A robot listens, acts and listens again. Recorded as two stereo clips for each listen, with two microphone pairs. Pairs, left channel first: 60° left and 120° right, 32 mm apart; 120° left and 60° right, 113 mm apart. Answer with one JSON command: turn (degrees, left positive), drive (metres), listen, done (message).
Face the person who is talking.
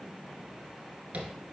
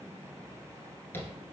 {"listen": true}
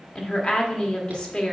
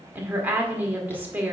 {"done": "Facing the woman speaking."}